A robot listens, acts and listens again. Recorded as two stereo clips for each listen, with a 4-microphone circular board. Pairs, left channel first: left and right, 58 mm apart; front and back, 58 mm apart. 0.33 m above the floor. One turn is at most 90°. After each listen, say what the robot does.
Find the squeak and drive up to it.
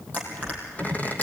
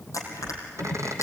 Turn 90° left.
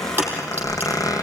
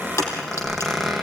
Turn 90° left.
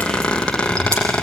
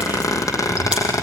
Turn 15° left.
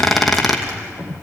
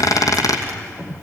Drive 1.0 m forward.
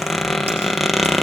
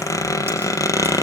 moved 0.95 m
Drive 1.0 m forward.
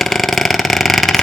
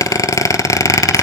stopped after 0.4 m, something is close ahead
Arrived at the squeak, straight ahead.